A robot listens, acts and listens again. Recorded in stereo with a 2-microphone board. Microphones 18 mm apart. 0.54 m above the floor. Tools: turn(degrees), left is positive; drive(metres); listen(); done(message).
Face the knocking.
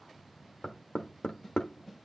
turn(degrees=50)
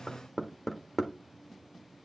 turn(degrees=10)
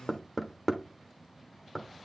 done("Facing the knocking.")